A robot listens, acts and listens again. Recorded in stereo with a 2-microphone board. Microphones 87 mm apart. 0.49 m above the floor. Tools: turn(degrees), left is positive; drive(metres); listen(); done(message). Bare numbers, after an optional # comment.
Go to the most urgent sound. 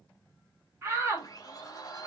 # The shout: about 30° right or 150° right.
turn(-30)
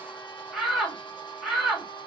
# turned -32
drive(1.0)
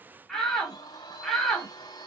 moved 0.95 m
drive(1.0)
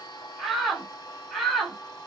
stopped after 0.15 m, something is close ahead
done("I am next to the shout.")